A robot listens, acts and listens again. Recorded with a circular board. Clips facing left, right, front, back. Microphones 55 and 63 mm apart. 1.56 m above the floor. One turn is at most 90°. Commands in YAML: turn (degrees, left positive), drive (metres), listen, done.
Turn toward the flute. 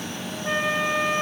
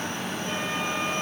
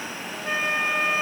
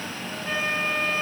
turn: 70
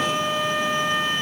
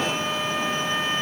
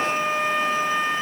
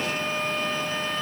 turn: 15
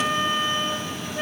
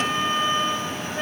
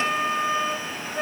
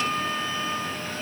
done: "Found it: a flute, straight ahead."